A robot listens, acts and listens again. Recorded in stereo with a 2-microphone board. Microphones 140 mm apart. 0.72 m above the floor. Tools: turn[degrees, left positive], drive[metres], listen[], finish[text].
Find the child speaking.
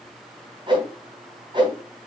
Action: listen[]
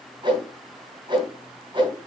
Action: listen[]
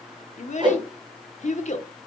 Thought: The child speaking: about 65° left or 115° left.
Action: turn[65]
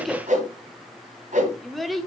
Action: finish[Facing the child speaking.]